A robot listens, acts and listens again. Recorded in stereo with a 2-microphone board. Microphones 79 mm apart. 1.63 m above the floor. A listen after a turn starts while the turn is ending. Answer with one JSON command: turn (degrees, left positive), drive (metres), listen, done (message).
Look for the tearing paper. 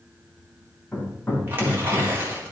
{"turn": -30}
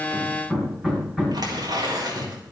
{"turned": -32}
{"turn": -120}
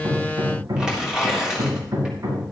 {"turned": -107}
{"turn": -10}
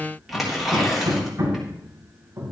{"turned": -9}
{"done": "Facing the tearing paper, 2 to 4 m away."}